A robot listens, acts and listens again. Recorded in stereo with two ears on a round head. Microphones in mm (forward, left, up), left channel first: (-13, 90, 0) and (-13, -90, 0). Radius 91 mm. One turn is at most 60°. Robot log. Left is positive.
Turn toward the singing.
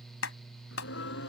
note: The singing: about 65° left or 115° left.
cmd yaw +60
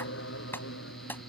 note: So it is at 60° left.
cmd yaw +60
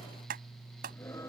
note: The singing is now 15° left.
cmd yaw +15
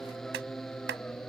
end: Found it: singing, straight ahead.